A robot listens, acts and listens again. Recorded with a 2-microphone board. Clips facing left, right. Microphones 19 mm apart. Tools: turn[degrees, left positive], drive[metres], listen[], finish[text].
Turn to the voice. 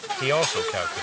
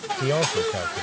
Thought: The man speaking: about 40° left or 140° left.
Action: turn[40]
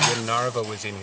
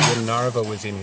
Action: finish[Facing the man speaking.]